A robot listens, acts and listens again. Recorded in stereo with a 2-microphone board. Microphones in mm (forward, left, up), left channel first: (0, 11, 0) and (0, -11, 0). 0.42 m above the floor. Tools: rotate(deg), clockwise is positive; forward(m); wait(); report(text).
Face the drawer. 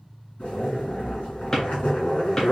rotate(-25)
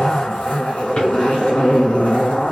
wait()
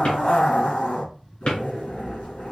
rotate(-130)
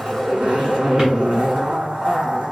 rotate(35)
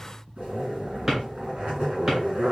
rotate(25)
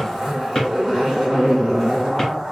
rotate(-15)
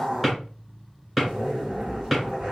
report("Facing the drawer.")